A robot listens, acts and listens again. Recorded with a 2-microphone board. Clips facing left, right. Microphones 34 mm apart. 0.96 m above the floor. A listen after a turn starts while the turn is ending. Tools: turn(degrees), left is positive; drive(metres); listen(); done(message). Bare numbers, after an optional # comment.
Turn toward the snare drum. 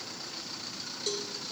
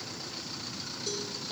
listen()
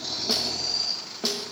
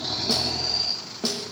turn(30)
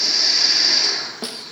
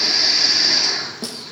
# So it is at 140° left.
turn(140)
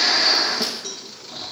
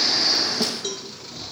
# The snare drum is now 10° left.
turn(10)
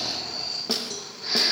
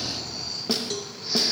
done("Facing the snare drum, under 1 m away.")